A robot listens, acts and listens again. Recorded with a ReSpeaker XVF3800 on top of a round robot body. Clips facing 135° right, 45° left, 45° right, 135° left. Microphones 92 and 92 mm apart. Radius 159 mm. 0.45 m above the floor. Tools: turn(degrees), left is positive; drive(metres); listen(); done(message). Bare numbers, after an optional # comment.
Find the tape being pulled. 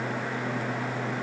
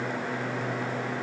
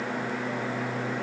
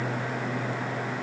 listen()
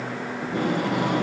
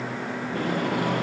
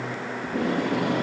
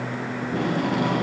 # The tape being pulled: 150° left.
turn(150)
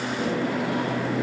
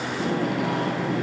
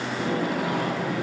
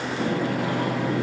# The tape being pulled is now 25° left.
turn(25)
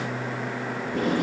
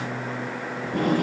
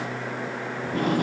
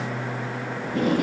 done("Facing the tape being pulled.")